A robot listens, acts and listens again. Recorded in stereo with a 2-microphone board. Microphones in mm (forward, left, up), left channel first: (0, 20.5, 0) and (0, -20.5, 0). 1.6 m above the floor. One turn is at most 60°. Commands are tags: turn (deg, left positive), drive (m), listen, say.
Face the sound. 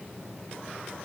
<listen/>
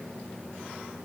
<listen/>
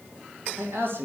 <turn deg="-60"/>
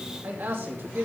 <turn deg="-60"/>
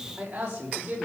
<turn deg="-30"/>
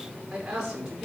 <turn deg="-10"/>
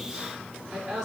<say>Found it: a man speaking, straight ahead, over 4 m away.</say>